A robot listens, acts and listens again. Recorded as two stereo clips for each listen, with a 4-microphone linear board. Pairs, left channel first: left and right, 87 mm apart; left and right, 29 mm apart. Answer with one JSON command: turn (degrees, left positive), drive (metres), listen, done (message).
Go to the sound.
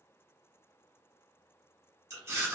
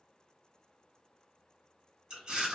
{"turn": -35}
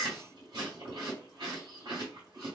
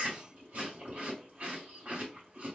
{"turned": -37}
{"turn": -105}
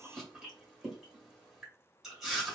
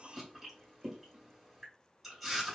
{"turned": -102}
{"drive": 1.0}
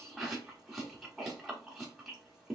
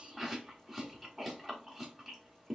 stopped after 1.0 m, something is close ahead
{"done": "Arrived at the chewing, straight ahead."}